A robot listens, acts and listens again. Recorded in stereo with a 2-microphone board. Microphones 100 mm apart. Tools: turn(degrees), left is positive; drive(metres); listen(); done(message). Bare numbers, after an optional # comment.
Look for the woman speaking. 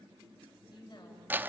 # The woman speaking: about 50° left or 130° left.
turn(50)
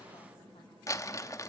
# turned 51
listen()
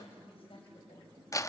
# So it is at 60° left.
turn(60)
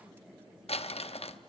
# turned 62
listen()
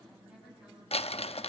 listen()
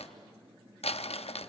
done("Facing where the woman speaking came from. I can't hear it now.")